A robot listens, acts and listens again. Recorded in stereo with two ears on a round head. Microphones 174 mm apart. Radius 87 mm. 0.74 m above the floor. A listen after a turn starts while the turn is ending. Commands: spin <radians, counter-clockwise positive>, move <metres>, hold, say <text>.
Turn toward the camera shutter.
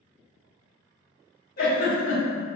hold
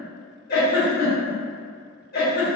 hold
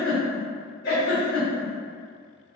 say I can't make out a camera shutter, only a giggle.